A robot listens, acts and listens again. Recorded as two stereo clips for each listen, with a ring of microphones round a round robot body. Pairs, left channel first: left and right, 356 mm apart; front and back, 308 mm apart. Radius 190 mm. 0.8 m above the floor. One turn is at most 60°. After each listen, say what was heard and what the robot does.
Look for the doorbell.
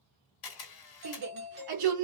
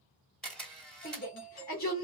The doorbell: 30° right. Turn 30° right.
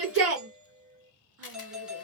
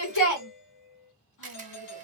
Found it: a doorbell, straight ahead.